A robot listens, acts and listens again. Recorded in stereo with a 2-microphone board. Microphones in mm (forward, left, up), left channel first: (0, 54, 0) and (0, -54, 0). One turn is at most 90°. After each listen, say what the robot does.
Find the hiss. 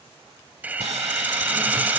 Turn 15° right.
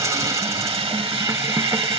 Turn 90° right.
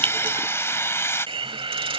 Turn 60° right.
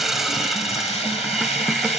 Found it: a hiss, straight ahead.